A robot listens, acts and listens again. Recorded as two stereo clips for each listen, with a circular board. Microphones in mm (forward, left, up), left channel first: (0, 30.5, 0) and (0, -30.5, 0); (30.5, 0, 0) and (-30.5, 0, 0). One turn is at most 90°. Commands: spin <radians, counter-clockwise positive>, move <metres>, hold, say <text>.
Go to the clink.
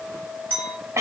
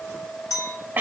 spin 0.52
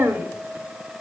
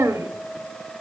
hold
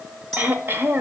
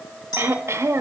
spin 0.17
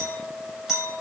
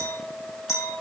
move 1.0
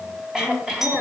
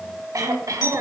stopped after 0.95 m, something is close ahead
hold
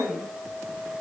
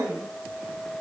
hold
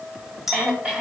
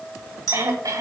say Something is in my way. I am facing the clink but have not reached it.